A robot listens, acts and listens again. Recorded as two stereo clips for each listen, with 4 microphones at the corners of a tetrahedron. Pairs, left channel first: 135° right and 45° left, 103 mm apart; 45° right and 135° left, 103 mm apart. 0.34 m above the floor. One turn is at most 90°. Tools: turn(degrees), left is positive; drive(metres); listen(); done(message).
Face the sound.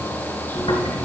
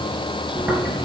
turn(degrees=-90)
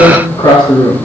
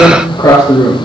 turn(degrees=-90)
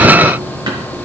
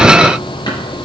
done("Facing the tearing paper, over 4 m away.")